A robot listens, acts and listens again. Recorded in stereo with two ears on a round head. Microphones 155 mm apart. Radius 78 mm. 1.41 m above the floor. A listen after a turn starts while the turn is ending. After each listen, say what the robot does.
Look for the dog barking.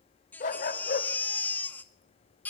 Turn 55° left.
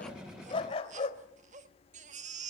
Turn 35° left.
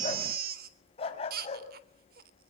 Turn 35° left.
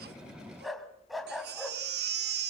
Found it: a dog barking, straight ahead.